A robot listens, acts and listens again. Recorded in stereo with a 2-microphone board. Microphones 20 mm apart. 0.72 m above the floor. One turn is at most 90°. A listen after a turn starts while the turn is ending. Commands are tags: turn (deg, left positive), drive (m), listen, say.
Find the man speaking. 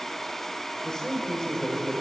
<turn deg="35"/>
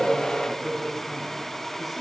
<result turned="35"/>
<say>Found it: a man speaking, straight ahead, over 4 m away.</say>